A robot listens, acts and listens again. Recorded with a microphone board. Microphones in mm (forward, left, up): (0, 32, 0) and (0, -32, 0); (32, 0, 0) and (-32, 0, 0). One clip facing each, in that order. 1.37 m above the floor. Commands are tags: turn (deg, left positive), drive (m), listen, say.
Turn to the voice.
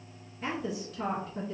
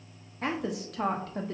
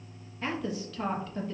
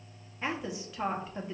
<turn deg="-105"/>
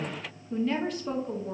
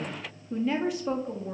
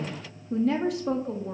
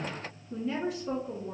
<turn deg="-10"/>
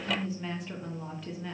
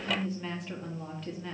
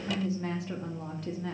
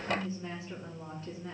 <say>Facing the woman speaking, under 1 m away.</say>